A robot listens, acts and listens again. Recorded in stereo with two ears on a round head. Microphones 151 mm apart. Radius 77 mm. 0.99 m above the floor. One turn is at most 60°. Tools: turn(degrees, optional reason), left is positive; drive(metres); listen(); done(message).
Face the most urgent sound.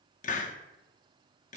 listen()
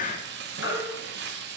turn(degrees=60, reason="The baby crying: about 70° left or 110° left.")
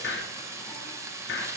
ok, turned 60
listen()
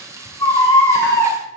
turn(degrees=15, reason="So it is at 15° left.")
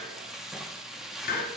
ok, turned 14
listen()
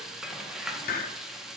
listen()
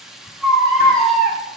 done("Found it: a baby crying, straight ahead, 2 to 4 m away.")